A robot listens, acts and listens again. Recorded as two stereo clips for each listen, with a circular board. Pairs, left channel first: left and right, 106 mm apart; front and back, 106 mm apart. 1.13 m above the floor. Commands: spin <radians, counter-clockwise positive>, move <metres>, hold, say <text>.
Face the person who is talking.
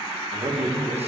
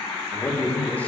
spin -1.31
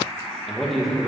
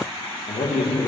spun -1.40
say Facing the man speaking, under 1 m away.